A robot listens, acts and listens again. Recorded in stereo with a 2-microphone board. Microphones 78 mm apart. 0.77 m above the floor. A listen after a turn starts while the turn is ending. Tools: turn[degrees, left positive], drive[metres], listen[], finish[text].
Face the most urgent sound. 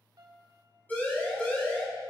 Thought: The siren: about 25° left or 155° left.
Action: turn[25]
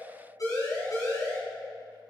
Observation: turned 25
Thought: So it is at 130° left.
Action: turn[130]
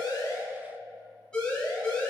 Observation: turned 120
Thought: The siren is now 10° left.
Action: turn[10]
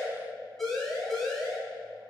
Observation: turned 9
Action: finish[Facing the siren.]